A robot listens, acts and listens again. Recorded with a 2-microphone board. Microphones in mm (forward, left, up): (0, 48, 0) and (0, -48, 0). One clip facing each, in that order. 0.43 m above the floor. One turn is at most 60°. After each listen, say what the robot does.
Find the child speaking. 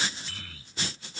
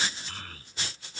Turn 50° right.
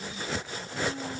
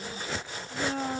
Turn 60° right.
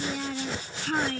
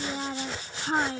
Turn 25° right.
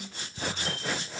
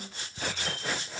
Keep listening.
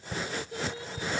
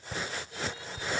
Turn 30° left.
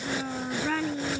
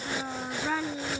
Turn 10° right.
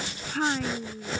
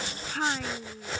Found it: a child speaking, straight ahead.